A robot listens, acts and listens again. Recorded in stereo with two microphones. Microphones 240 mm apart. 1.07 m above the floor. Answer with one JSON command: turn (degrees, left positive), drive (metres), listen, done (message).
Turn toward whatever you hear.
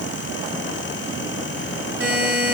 {"turn": -65}
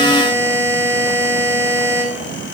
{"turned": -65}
{"turn": -10}
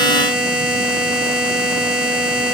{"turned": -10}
{"done": "Facing the buzzer, 1 to 2 m away."}